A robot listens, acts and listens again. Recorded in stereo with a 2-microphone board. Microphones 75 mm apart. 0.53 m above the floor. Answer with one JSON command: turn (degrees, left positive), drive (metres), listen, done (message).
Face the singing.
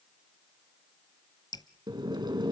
{"listen": true}
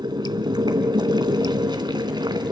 {"listen": true}
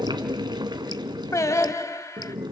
{"turn": 45}
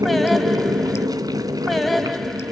{"listen": true}
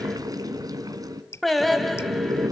{"done": "Facing the singing."}